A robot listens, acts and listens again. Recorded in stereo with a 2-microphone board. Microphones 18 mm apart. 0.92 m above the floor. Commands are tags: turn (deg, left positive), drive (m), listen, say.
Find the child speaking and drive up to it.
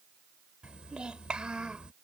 <turn deg="-65"/>
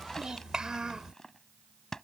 <turn deg="-50"/>
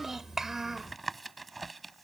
<turn deg="-25"/>
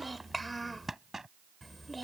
<drive m="1.0"/>
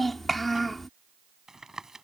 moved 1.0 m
<drive m="1.0"/>
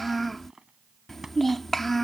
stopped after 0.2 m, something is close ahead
<turn deg="10"/>
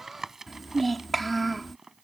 <say>I am next to the child speaking.</say>